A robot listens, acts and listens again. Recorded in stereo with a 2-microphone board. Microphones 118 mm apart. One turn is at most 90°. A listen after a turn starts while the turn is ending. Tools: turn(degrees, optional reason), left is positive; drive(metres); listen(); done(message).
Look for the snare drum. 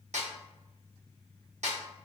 turn(degrees=-70, reason="The snare drum: about 70° right or 110° right.")
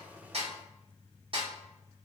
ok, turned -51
turn(degrees=-50, reason="So it is at 50° right.")
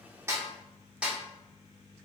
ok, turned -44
turn(degrees=-10, reason="The snare drum is now 10° right.")
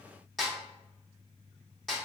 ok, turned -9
done("Facing the snare drum.")